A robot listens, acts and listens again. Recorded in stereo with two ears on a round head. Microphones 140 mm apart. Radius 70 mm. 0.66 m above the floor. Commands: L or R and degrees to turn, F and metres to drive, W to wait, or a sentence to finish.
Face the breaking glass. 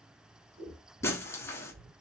L15
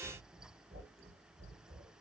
W
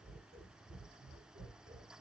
I heard breaking glass, but can't make it out now. It was about straight ahead or 150° left.